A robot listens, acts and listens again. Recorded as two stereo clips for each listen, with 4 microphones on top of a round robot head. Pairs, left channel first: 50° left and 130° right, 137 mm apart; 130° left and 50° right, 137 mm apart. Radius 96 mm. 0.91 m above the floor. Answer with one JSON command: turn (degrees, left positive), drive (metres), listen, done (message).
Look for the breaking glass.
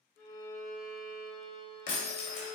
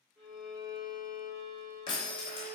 {"turn": 70}
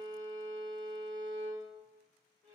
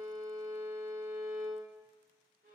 {"done": "Facing where the breaking glass came from. I can't hear it now."}